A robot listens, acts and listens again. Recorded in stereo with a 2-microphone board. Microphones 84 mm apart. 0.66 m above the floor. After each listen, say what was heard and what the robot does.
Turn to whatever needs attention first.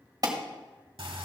The alarm: about 50° right or 130° right. Turn 50° right.
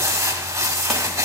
Keep listening.
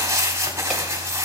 Keep listening.
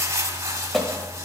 Facing the alarm.